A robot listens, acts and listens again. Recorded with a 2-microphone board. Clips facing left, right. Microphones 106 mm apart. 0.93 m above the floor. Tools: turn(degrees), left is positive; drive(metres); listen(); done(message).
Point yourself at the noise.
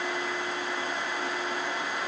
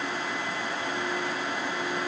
listen()
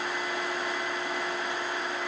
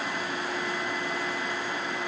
listen()
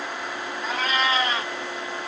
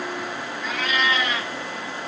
turn(degrees=35)
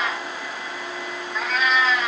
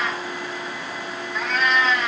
done("Facing the cat meowing, under 1 m away.")